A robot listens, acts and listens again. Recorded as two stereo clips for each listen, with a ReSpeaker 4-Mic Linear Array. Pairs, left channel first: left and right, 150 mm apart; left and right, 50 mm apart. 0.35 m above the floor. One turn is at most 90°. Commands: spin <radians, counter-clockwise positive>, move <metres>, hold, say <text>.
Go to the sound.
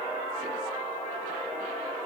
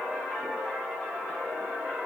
hold
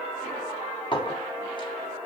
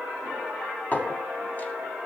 spin 0.61
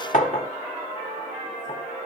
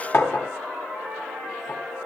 spin 1.57
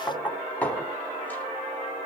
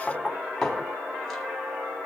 spin 0.17
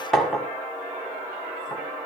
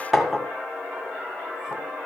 move 1.0
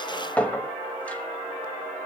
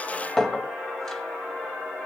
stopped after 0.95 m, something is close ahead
spin 0.17
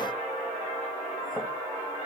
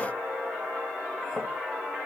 hold
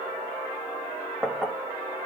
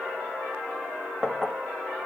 say I am next to the clink.